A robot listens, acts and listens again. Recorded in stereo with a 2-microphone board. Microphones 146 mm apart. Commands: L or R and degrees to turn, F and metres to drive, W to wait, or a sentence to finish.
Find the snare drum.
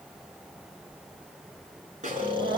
R60
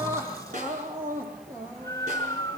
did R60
R60
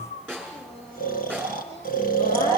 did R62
Found it: a snare drum, straight ahead.